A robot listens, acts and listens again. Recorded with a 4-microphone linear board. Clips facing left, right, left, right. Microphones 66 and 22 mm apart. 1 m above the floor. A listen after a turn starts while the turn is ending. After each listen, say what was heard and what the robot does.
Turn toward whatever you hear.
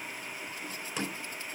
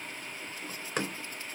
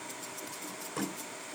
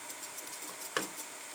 The door slam: about 50° right or 130° right. Turn 50° right.
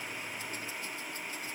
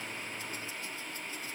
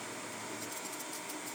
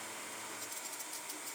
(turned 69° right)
Keep listening.
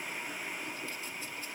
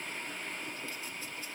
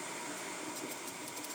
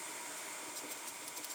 I heard a door slam, but can't make it out now. It was about 15° left or 60° right.